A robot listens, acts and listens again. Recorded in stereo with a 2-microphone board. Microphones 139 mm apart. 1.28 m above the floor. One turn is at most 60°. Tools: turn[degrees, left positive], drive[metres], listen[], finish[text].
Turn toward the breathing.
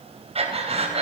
Thought: The breathing: about 45° right or 135° right.
Action: turn[-45]
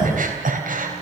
Thought: So it is at 90° right.
Action: turn[-60]
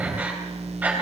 Thought: The breathing is now 10° right.
Action: turn[-10]
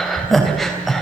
Action: finish[Found it: breathing, straight ahead, 2 to 4 m away.]